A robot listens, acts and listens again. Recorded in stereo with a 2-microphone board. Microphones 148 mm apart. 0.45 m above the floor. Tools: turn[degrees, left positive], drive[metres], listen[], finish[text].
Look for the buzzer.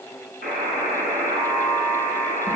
Action: turn[-90]
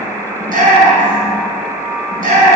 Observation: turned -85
Thought: So it is at 10° right.
Action: turn[-10]
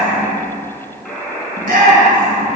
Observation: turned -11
Action: finish[Facing the buzzer, over 4 m away.]